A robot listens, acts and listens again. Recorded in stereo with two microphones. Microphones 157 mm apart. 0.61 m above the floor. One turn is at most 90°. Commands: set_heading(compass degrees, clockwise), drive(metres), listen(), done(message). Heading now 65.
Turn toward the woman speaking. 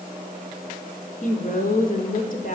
set_heading(5)
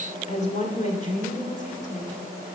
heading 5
set_heading(310)
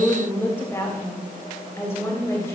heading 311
set_heading(296)
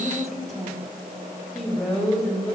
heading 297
done("Facing the woman speaking.")